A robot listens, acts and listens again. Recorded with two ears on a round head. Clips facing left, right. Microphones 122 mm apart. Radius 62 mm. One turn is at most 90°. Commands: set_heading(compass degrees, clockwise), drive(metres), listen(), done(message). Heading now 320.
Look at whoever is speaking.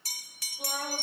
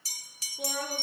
set_heading(35)
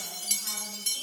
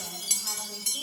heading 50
listen()
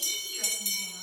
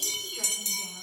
listen()
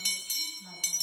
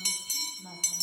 set_heading(65)
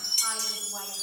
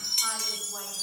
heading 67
listen()
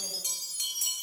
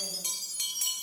listen()
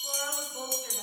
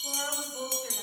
done("Found it: a woman speaking, straight ahead.")